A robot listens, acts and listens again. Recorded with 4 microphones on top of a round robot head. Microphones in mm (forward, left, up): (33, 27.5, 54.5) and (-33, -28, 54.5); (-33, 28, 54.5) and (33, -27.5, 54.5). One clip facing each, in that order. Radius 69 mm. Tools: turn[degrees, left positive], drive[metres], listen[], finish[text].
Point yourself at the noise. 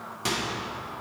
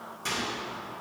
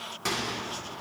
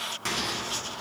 Thought: The microwave: 55° left.
Action: turn[55]
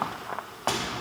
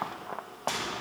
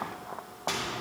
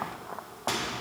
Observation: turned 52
Action: finish[Found it: a microwave, straight ahead, 2 to 4 m away.]